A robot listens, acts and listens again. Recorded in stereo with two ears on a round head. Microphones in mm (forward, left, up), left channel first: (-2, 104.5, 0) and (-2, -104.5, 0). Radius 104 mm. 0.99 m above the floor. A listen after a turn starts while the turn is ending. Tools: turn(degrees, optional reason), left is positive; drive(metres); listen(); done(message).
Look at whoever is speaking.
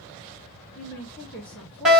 turn(degrees=30)
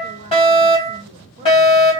turn(degrees=-25, reason="So it is at 25° right.")
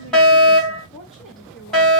done("Facing the woman speaking, 1 to 2 m away.")